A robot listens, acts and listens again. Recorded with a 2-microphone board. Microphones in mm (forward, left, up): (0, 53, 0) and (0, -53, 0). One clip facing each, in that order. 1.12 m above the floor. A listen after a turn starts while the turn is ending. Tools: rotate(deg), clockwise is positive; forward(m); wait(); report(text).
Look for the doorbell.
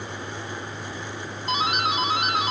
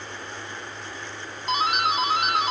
rotate(30)
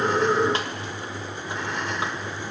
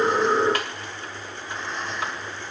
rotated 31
wait()
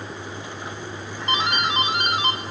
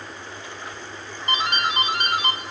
rotate(-30)
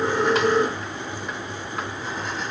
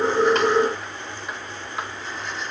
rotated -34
wait()
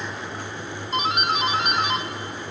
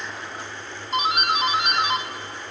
report("Found it: a doorbell, straight ahead.")